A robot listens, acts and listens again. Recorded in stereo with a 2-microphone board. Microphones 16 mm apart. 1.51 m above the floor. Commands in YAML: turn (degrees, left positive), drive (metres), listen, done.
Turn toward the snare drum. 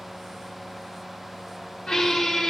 listen: true
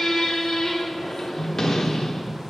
listen: true
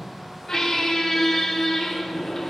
done: "I can't make out a snare drum, only a squeak."